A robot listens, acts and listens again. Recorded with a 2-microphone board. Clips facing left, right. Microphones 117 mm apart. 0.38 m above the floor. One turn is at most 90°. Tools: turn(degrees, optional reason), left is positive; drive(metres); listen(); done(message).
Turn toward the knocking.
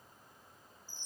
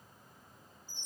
listen()
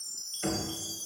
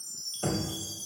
turn(degrees=-30, reason="The knocking: about 30° right or 150° right.")
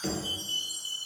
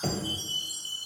turn(degrees=-90, reason="So it is at 115° right.")
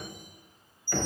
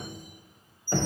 turn(degrees=-35, reason="The knocking is now 35° right.")
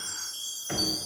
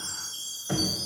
turn(degrees=-15, reason="The knocking is now 15° right.")
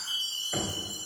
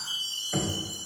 done("Facing the knocking, 1 to 2 m away.")